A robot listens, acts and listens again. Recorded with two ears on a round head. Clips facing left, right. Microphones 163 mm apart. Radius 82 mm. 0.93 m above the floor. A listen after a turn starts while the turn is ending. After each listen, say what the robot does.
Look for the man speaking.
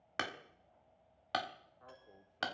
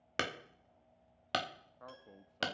Turn 65° right.
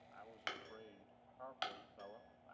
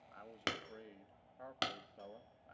Turn 20° right.
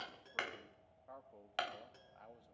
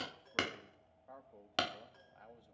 Found it: a man speaking, straight ahead.